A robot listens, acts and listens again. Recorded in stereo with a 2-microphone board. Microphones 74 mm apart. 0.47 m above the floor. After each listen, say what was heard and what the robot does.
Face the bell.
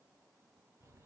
Keep listening.
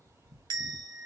The bell: about 70° right or 110° right. Turn 70° right.
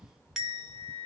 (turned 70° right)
Facing the bell, 1 to 2 m away.